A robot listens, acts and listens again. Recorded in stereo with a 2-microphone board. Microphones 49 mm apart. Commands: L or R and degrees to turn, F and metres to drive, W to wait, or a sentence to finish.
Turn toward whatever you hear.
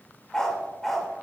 L30
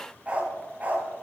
R30
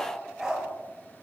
R10
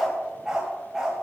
R10
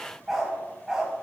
Found it: a dog barking, straight ahead.